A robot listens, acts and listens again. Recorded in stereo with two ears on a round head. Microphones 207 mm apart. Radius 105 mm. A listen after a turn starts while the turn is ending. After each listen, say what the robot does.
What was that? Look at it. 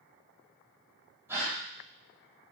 Turn 30° right.
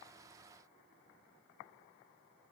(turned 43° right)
Keep listening.
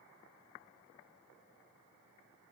I heard a gasp, but can't make it out now. It was about 30° left or 125° right.